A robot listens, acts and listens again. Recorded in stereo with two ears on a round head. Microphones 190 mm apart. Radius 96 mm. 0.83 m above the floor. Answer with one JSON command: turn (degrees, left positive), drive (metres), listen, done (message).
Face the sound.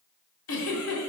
{"turn": 75}
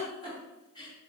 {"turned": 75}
{"turn": 20}
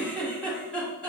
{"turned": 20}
{"done": "Found it: a giggle, straight ahead, 2 to 4 m away."}